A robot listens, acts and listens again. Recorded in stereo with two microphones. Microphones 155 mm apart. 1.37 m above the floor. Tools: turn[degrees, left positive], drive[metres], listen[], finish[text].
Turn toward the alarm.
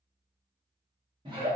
Action: listen[]
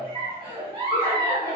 Action: listen[]
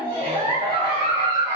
Action: finish[I can't make out an alarm to turn to.]